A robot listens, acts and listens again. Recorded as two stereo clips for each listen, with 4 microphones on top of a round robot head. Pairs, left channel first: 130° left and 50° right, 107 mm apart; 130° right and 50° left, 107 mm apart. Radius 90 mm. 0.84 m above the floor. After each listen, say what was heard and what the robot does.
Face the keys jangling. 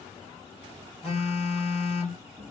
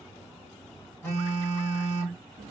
Keep listening.
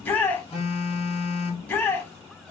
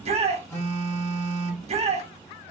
Keep listening.
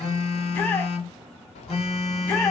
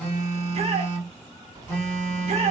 The keys jangling: 105° left. Turn 105° left.
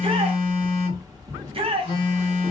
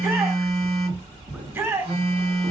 The keys jangling is now 10° left. Turn 10° left.
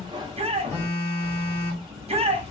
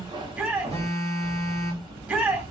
Found it: keys jangling, straight ahead.